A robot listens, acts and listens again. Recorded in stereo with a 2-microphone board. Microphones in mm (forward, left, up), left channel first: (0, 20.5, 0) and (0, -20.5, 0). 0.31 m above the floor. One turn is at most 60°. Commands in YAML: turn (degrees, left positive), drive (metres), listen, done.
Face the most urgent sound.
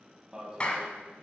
turn: -25
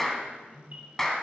turn: -60
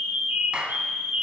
turn: -60
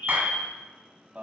turn: -50
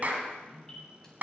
listen: true
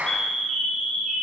turn: 15
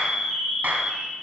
done: "Facing the alarm."